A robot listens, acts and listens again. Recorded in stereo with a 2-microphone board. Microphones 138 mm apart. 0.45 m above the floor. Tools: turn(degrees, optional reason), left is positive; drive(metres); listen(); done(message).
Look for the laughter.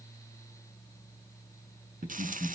turn(degrees=-75, reason="The laughter: about 75° right or 105° right.")
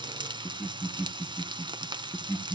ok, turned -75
turn(degrees=-10, reason="So it is at 10° right.")
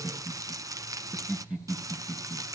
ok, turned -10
done("Found it: laughter, straight ahead, over 4 m away.")